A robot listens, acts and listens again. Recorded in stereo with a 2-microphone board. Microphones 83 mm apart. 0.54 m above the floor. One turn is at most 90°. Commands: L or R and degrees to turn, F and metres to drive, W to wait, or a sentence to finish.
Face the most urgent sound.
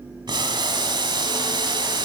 W
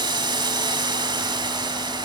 W
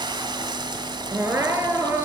R30
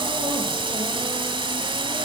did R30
W
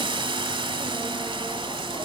W
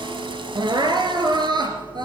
R90
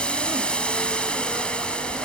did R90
R30
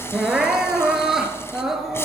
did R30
Found it: crying, straight ahead.